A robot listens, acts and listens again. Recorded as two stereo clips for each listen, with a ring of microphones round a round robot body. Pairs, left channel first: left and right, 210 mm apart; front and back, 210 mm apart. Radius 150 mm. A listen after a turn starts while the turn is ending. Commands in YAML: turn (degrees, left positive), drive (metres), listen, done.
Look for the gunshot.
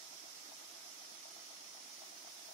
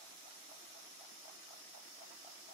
listen: true
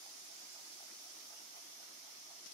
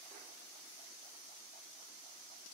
listen: true
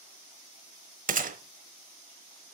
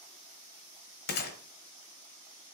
turn: -40
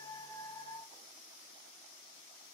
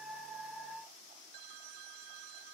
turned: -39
done: "I heard a gunshot from this way, but can't make it out now."